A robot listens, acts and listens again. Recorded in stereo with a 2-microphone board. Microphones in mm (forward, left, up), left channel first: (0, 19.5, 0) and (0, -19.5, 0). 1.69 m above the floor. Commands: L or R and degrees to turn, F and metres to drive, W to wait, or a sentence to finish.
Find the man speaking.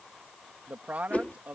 R40
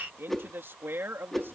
R100
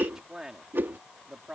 R15
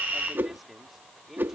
Facing the man speaking.